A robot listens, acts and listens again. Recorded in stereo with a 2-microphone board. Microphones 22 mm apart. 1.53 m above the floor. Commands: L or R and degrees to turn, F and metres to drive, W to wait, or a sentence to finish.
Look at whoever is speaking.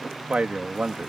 R90
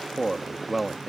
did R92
R15
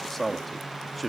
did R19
Facing the man speaking.